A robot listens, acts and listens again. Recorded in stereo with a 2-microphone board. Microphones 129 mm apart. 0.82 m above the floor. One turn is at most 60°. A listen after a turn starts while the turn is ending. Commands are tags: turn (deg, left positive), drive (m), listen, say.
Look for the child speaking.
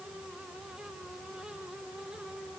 <listen/>
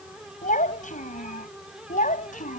<turn deg="60"/>
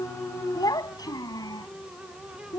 <turn deg="30"/>
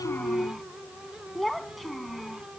<say>Found it: a child speaking, straight ahead.</say>